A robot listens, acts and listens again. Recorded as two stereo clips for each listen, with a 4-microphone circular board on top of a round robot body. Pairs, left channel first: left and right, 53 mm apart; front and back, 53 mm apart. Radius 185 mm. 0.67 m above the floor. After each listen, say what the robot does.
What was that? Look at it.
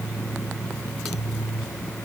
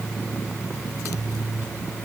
Keep listening.
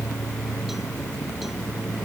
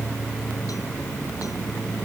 Keep listening.
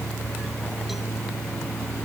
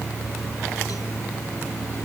I can't make out anything to turn to.